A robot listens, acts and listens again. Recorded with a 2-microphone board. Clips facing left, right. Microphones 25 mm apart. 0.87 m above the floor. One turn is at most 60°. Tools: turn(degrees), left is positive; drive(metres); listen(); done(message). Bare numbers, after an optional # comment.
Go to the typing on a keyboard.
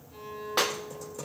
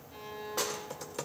# The typing on a keyboard: about 60° right or 120° right.
turn(-60)
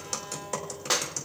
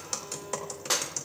drive(1.0)
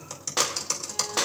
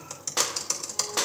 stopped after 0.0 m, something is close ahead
done("Blocked. The typing on a keyboard is further on, straight ahead.")